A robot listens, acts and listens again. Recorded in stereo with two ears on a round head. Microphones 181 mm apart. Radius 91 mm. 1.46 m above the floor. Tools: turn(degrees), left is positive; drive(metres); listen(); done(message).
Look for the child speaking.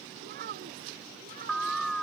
turn(degrees=-45)
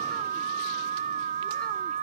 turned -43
listen()
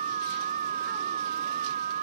listen()
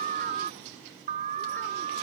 done("I heard a child speaking, but can't make it out now. It was about straight ahead or 95° right.")